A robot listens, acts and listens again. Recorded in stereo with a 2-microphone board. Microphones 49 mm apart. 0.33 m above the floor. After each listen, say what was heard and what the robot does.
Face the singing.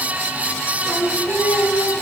Turn 90° left.
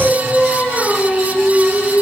So it is at 10° left. Turn 10° left.
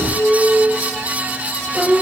Found it: singing, straight ahead.